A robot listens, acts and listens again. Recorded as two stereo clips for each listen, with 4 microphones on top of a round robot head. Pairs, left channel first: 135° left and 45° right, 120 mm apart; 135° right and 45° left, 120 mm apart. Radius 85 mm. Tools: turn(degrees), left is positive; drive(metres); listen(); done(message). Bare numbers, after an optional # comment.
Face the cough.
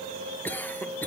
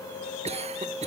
# The cough: 60° left.
turn(60)
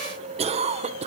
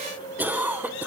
# The cough is now 25° right.
turn(-25)
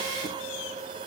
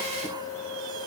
listen()
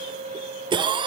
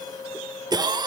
done("Facing the cough, 1 to 2 m away.")